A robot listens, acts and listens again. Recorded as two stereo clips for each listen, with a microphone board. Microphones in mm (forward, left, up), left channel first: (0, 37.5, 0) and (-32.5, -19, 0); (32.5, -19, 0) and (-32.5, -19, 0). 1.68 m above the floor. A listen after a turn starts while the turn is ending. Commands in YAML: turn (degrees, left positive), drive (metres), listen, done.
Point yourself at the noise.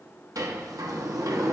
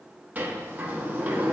turn: -120
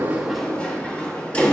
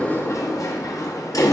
turn: -10
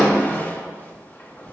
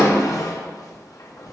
done: "Facing the sliding door."